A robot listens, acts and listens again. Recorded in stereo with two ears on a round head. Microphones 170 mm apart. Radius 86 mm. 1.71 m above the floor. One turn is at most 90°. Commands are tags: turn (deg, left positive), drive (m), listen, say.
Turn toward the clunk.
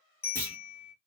<turn deg="30"/>
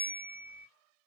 <listen/>
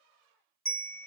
<say>I heard a clunk, but can't make it out now. It was about 15° right or 135° left.</say>